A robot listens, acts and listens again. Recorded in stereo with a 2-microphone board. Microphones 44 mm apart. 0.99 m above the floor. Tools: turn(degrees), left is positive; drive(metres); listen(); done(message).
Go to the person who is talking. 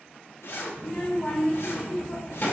turn(degrees=35)
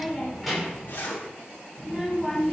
drive(metres=1.0)
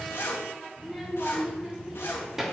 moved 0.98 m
turn(degrees=-10)
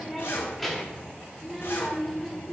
drive(metres=1.0)
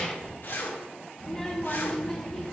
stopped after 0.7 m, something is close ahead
turn(degrees=10)
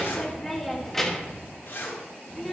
done("I am next to the child speaking.")